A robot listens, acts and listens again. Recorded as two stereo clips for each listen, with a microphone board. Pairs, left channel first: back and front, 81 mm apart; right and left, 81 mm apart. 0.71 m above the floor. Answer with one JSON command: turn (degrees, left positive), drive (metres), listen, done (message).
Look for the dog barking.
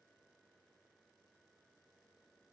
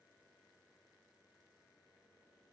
{"listen": true}
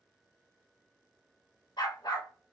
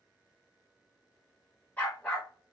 {"turn": -160}
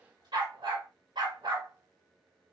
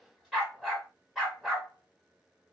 {"done": "Found it: a dog barking, straight ahead."}